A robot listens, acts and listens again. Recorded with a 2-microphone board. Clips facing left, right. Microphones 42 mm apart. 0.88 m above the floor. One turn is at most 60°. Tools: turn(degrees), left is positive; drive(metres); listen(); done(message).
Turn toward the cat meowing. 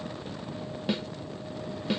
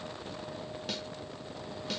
listen()
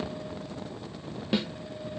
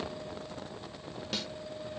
listen()
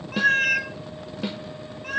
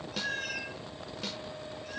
turn(degrees=55)
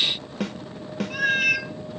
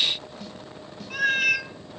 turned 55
done("Facing the cat meowing, 1 to 2 m away.")